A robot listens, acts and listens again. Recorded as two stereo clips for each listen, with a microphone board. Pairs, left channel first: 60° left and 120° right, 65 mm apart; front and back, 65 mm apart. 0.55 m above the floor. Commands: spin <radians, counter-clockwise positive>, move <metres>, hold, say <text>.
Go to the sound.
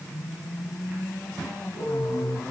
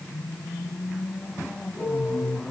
spin 1.75
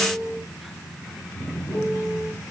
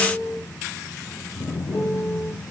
spin 0.35
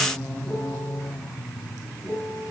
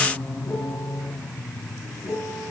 move 1.0
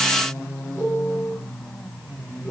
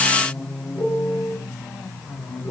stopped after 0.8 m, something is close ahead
spin 0.17
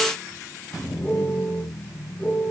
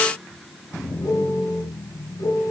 say Something is in my way. I am facing the piano but have not reached it.